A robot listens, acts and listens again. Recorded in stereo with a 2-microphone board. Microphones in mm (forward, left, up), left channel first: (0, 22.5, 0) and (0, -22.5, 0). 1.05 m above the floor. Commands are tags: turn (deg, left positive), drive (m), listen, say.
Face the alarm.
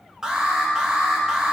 <turn deg="-30"/>
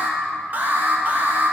<turn deg="-135"/>
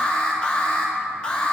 <turn deg="20"/>
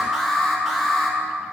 <say>Facing the alarm, 1 to 2 m away.</say>